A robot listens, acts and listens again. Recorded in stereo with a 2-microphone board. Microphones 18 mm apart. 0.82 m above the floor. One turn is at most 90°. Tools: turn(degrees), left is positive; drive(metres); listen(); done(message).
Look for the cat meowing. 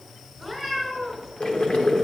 turn(degrees=25)
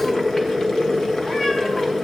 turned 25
listen()
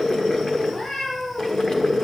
turn(degrees=90)
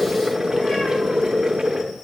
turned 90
turn(degrees=40)
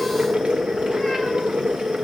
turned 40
listen()
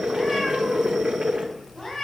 turn(degrees=20)
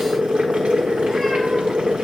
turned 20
listen()
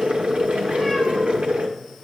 listen()
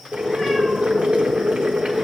done("I heard a cat meowing from this way, but can't make it out now.")